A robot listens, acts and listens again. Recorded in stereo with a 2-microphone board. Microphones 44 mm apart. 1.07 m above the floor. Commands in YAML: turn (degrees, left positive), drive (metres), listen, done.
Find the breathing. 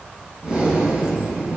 turn: -20
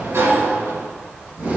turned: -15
turn: -145
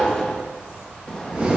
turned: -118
turn: -25
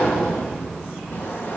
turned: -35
turn: 10
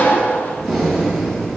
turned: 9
done: "Facing the breathing, 2 to 4 m away."